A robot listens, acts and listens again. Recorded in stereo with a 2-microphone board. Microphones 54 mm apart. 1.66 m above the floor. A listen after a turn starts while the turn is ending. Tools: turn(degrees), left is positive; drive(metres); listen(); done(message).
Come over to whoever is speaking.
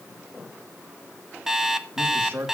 turn(degrees=-40)
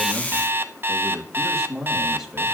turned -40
drive(metres=1.0)
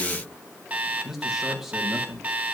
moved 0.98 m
drive(metres=1.0)
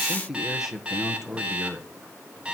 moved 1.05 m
drive(metres=1.0)
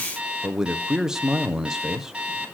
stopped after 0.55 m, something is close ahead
turn(degrees=-10)
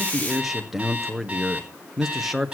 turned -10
done("I am next to the man speaking.")